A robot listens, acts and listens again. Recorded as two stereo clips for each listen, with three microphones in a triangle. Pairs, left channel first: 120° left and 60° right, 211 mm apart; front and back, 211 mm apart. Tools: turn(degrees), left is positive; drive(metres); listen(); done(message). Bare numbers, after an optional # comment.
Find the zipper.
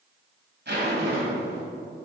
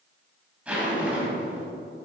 # The zipper: 95° right.
turn(-95)
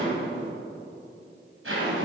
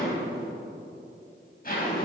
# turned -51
# The zipper is now 45° right.
turn(-45)
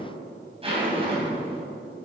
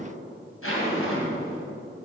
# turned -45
done("Facing the zipper.")